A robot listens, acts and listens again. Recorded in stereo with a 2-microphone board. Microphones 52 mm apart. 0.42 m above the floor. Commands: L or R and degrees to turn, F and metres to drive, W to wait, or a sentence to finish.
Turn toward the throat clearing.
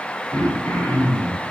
L65
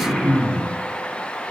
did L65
Found it: throat clearing, straight ahead.